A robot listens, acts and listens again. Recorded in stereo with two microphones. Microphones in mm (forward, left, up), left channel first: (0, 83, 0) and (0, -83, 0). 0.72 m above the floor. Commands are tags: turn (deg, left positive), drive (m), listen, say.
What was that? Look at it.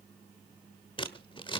<turn deg="30"/>
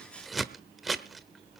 <say>Found it: scissors, straight ahead.</say>